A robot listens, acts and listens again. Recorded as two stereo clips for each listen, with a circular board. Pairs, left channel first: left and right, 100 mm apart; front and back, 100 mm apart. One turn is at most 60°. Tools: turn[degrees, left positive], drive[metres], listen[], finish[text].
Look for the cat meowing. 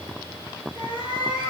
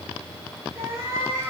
Thought: The cat meowing: 120° left.
Action: turn[60]
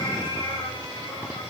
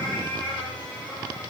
Thought: Nothing new. It was at 60° left.
Action: turn[60]
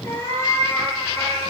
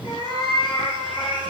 Thought: The cat meowing is now 30° left.
Action: turn[30]
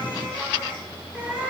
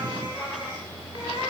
Thought: The cat meowing is now 15° right.
Action: turn[-15]
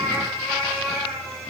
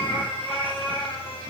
Action: finish[Found it: a cat meowing, straight ahead.]